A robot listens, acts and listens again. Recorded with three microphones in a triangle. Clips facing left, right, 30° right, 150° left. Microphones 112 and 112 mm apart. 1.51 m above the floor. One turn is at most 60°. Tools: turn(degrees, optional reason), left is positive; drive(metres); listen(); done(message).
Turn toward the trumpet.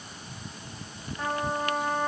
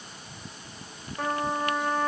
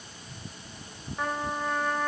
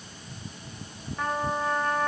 turn(degrees=-60, reason="The trumpet: 115° right.")
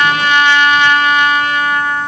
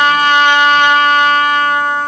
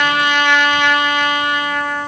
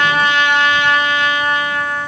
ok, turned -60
turn(degrees=-45, reason="The trumpet is now 45° right.")
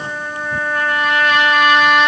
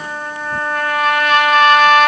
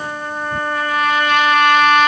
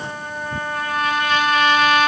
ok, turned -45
done("Found it: a trumpet, straight ahead, 2 to 4 m away.")